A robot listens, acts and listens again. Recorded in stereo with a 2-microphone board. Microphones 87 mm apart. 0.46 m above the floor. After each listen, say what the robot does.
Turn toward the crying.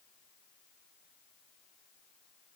Keep listening.
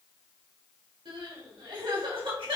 Turn 75° right.
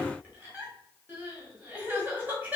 Turn 20° right.
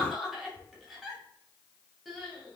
Facing the crying.